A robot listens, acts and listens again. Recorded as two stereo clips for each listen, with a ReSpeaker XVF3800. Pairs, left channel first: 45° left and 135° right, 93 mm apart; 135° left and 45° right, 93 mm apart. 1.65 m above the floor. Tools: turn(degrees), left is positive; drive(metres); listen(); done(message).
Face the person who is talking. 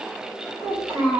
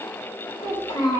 turn(degrees=155)
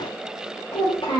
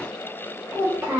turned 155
turn(degrees=20)
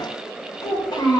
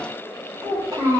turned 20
done("Found it: a child speaking, straight ahead.")